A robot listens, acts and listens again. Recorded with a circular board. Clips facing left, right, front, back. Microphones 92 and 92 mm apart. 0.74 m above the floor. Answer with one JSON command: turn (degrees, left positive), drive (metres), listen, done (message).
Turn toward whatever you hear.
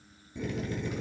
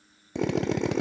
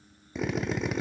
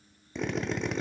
{"turn": -85}
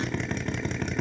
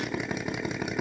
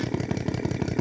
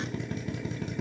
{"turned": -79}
{"turn": -10}
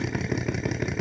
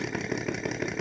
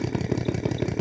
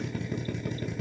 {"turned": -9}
{"done": "Facing the drill, under 1 m away."}